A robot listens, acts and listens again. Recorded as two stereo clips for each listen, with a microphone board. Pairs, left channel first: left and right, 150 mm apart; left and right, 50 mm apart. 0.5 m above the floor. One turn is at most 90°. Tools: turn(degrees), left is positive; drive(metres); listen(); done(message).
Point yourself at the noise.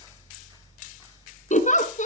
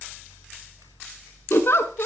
turn(degrees=55)
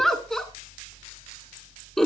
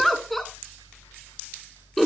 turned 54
done("Facing the giggle.")